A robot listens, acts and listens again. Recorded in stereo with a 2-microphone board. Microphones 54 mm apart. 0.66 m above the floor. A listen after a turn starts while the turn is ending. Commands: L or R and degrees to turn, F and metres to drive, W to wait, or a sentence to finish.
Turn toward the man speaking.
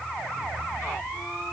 W
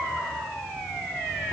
W
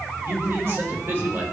R45
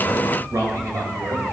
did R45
R110
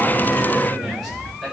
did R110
Facing the man speaking.